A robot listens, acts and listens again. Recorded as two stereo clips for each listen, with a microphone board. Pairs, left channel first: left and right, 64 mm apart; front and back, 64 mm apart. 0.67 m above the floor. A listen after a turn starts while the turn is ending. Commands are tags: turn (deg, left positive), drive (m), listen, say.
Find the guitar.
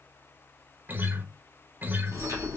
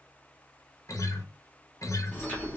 <turn deg="-30"/>
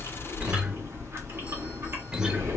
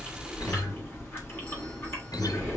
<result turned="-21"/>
<turn deg="-10"/>
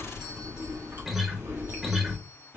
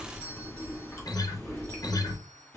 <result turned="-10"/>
<say>Facing the guitar, under 1 m away.</say>